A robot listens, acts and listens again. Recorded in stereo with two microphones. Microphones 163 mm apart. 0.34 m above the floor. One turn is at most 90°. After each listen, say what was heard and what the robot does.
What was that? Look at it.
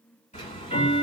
The ticking: about 45° left or 135° left. Turn 45° left.
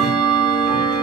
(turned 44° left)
Facing the ticking.